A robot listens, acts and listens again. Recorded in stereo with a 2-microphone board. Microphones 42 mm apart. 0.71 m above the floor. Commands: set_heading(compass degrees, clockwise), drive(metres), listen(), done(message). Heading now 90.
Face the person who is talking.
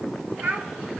set_heading(165)
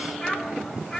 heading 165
done("Facing the child speaking, 2 to 4 m away.")